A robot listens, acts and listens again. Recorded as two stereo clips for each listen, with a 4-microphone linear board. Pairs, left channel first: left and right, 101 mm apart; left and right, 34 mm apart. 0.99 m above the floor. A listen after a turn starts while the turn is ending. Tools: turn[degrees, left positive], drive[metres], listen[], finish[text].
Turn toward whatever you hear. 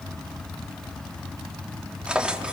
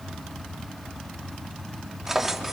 Action: turn[-30]
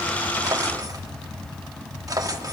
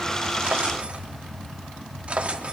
Thought: So it is at 145° right.
Action: turn[-145]
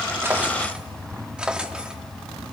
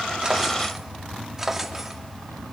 Thought: The drawer is now 10° right.
Action: turn[-10]
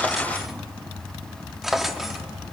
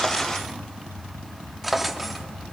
Action: finish[Found it: a drawer, straight ahead, under 1 m away.]